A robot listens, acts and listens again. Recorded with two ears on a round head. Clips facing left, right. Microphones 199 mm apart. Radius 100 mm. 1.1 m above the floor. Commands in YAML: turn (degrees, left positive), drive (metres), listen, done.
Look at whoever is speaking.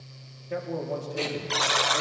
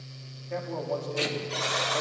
turn: 20
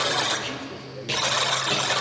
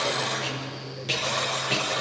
listen: true
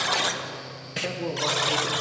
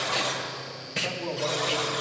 turn: 145
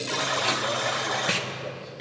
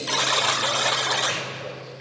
listen: true
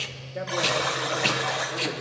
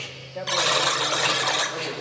turn: 20
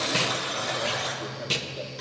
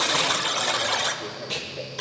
listen: true
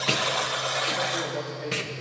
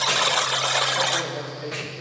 listen: true
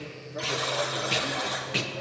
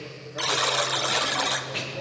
done: "Facing where the man speaking came from. I can't hear it now."